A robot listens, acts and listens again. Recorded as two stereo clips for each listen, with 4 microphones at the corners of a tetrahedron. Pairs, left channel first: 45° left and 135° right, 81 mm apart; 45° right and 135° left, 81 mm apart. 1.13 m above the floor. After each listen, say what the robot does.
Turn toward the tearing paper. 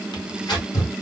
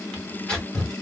Turn 30° left.
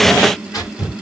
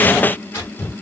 Turn 10° left.
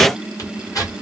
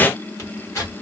Found it: tearing paper, straight ahead, 1 to 2 m away.